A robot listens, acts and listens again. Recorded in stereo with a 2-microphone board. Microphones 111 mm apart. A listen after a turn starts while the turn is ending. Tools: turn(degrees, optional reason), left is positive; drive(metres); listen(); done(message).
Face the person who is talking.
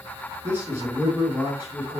turn(degrees=-20, reason="The man speaking: about 20° right or 160° right.")
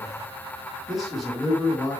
done("Found it: a man speaking, straight ahead, over 4 m away.")